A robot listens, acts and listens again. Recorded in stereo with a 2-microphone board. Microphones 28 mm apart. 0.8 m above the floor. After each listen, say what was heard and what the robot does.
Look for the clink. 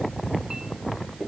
The clink: about 20° right or 160° right. Turn 20° right.
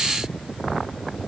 Keep listening.
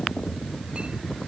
Keep listening.
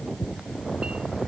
I heard a clink, but can't make it out now. It was about straight ahead or 140° right.